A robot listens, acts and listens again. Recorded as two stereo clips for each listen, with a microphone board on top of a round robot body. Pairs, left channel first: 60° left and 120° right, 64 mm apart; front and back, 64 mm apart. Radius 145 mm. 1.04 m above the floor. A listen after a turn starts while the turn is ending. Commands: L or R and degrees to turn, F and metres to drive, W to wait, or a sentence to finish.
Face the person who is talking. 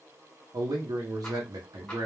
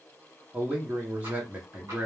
R115
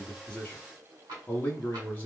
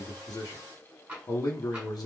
Found it: a man speaking, straight ahead, under 1 m away.